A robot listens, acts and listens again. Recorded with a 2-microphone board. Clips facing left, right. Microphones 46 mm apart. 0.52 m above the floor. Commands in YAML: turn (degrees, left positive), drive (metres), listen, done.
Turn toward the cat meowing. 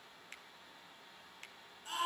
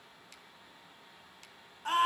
listen: true
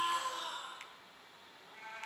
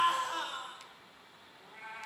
turn: -15
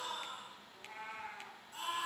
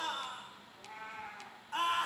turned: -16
turn: 30
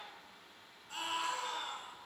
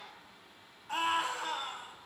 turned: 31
turn: -20
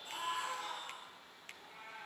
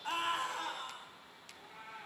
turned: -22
done: "Found it: a cat meowing, straight ahead, 2 to 4 m away."